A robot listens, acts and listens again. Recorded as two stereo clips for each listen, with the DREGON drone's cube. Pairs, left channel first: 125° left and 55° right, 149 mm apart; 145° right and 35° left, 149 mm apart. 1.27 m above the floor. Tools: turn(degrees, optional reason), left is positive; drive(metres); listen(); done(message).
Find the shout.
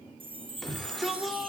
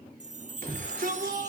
turn(degrees=35, reason="The shout: 35° left.")
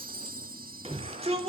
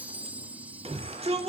turn(degrees=-10, reason="The shout is now 10° right.")
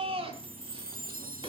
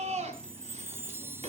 done("Found it: a shout, straight ahead.")